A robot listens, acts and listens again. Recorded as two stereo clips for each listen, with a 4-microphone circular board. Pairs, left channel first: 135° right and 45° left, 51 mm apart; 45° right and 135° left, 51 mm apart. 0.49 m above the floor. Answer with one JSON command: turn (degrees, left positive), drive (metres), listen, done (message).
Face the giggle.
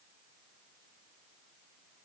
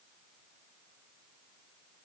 {"listen": true}
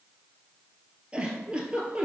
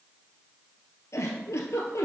{"turn": -25}
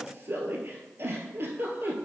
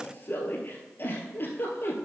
{"done": "Found it: a giggle, straight ahead."}